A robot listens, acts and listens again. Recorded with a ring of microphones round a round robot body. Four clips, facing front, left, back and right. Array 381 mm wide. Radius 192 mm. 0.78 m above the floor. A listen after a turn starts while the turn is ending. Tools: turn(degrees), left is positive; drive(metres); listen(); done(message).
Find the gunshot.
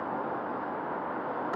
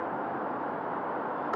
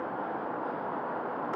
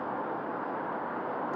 listen()
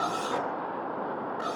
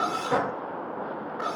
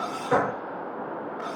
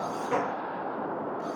turn(degrees=165)
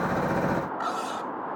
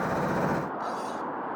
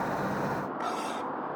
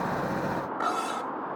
done("Facing where the gunshot came from. I can't hear it now.")